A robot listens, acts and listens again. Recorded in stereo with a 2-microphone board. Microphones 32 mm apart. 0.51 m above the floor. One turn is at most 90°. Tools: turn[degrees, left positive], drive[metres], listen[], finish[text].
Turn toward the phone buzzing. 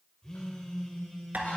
Thought: The phone buzzing: about 20° left or 160° left.
Action: turn[20]
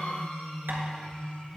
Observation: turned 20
Action: finish[Facing the phone buzzing, 1 to 2 m away.]